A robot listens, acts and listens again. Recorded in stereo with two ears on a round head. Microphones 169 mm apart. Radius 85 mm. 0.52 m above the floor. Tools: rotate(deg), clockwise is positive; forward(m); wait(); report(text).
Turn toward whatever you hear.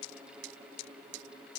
wait()
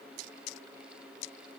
wait()
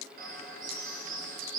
rotate(50)
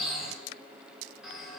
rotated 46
report("Facing the bird.")